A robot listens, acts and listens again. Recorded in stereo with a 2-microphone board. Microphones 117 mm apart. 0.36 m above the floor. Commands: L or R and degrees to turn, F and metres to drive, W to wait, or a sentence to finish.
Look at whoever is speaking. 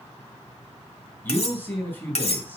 L15
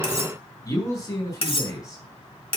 L150
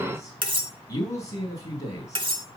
L35
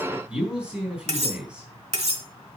R10
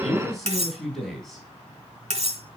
Found it: a man speaking, straight ahead.